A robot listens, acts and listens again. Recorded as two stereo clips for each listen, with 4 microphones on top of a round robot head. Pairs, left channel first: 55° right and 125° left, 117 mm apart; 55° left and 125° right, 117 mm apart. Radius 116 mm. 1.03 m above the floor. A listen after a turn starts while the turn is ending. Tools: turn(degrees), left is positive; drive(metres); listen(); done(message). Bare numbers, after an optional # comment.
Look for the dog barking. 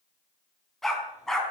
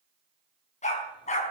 # The dog barking: 30° left.
turn(30)
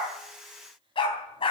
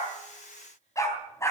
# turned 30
# The dog barking is now 10° right.
turn(-10)
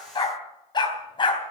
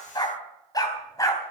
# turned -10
done("Facing the dog barking, 2 to 4 m away.")